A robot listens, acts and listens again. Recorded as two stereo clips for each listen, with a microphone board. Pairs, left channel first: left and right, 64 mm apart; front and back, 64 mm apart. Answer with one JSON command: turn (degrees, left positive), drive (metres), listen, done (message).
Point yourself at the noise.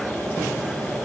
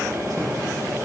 {"listen": true}
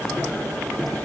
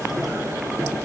{"listen": true}
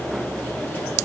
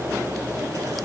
{"done": "I can't make out anything to turn to."}